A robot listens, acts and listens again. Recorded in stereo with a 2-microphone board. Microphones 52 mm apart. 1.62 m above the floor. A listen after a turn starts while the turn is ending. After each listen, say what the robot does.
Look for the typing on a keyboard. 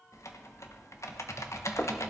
Turn 65° left.
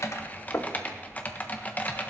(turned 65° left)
Turn 35° left.
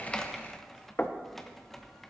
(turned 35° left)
Found it: typing on a keyboard, straight ahead.